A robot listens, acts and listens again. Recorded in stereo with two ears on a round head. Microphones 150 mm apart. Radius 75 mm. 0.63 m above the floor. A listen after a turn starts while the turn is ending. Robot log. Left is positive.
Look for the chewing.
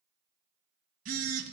cmd idle
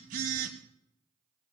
cmd idle
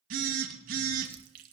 note: The chewing: about 60° right or 120° right.
cmd yaw -60
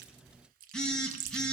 note: So it is at 60° right.
cmd yaw -60
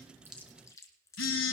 note: The chewing is now 20° left.
cmd yaw +20
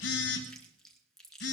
end: Facing the chewing, 1 to 2 m away.